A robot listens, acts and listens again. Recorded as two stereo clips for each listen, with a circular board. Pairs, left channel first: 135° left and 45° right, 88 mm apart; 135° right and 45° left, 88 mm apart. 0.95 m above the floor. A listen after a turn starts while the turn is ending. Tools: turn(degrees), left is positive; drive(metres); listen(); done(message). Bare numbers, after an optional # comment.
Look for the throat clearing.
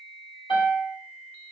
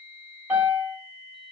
listen()
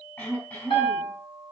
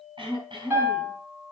# The throat clearing: 70° left.
turn(70)
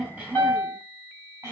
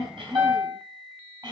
# The throat clearing is now 15° left.
turn(15)
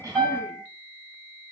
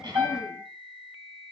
listen()
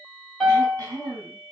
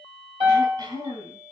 # The throat clearing is now 10° left.
turn(10)
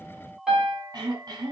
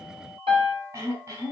done("Facing the throat clearing, over 4 m away.")